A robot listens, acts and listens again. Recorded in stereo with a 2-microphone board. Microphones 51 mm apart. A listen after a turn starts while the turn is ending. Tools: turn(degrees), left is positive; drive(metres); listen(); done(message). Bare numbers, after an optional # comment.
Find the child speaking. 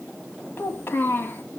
# The child speaking: about 50° left or 130° left.
turn(50)
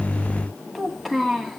done("Facing the child speaking, 2 to 4 m away.")